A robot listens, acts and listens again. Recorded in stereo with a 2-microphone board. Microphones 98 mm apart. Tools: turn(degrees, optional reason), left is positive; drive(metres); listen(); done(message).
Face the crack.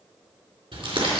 listen()
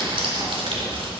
listen()
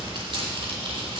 done("I can't make out a crack to turn to.")